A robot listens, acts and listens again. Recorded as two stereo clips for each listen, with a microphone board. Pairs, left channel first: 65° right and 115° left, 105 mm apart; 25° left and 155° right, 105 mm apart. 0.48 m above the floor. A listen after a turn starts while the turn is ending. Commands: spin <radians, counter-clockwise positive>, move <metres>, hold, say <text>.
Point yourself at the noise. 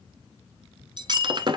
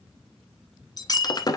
spin 1.22
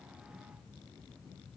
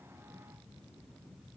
say Facing where the breaking glass came from. I can't hear it now.